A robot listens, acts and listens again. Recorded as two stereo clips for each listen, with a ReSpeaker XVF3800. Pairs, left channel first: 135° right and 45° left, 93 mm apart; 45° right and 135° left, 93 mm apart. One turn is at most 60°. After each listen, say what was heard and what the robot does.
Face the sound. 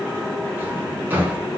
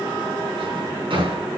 The drawer: 115° left. Turn 60° left.
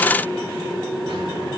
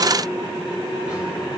Nothing new. It was at 55° left. Turn 55° left.
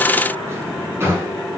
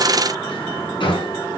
The drawer is now 15° right. Turn 15° right.
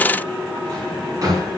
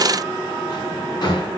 Found it: a drawer, straight ahead.